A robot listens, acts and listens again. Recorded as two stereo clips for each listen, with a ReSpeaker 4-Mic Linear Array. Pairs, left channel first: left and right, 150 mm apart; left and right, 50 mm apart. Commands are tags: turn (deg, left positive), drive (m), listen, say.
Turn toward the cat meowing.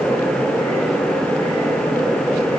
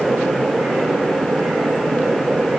<listen/>
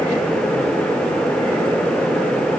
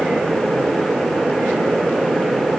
<listen/>
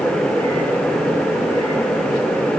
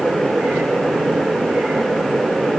<say>I can't make out a cat meowing.</say>